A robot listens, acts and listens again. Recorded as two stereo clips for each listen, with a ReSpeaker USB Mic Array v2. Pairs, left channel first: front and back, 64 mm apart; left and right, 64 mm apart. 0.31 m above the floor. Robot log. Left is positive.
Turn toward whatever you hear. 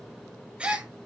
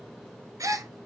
note: The gasp: 110° right.
cmd yaw -110
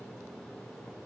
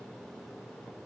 end: Facing where the gasp came from. I can't hear it now.